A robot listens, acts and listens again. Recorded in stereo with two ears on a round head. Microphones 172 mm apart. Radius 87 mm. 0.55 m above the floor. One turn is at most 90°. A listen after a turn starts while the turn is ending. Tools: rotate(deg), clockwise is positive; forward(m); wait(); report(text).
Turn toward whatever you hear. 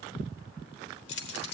rotate(-60)
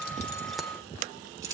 rotate(20)
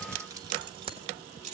rotate(40)
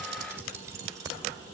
rotate(20)
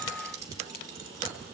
rotate(20)
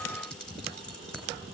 report("Found it: keys jangling, straight ahead.")